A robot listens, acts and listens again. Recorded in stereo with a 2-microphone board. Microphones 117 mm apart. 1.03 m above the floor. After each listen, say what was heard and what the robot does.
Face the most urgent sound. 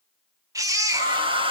The baby crying: about 30° right or 150° right. Turn 30° right.
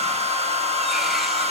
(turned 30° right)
Keep listening.
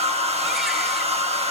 Keep listening.
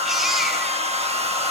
I heard a baby crying, but can't make it out now. It was about straight ahead or 120° right.